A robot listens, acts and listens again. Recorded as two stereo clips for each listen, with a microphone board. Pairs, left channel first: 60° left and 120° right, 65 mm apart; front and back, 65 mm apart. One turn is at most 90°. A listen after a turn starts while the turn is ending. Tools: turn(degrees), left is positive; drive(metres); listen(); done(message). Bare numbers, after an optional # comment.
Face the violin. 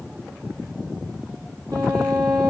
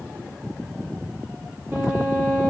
# The violin: 120° right.
turn(-90)
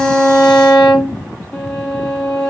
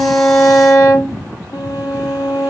# The violin is now 20° right.
turn(-20)
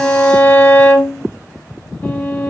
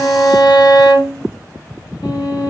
done("Facing the violin.")